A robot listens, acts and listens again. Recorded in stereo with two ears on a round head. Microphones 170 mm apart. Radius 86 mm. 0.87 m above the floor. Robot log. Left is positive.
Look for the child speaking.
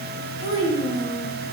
cmd yaw -90
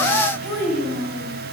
end: Facing the child speaking.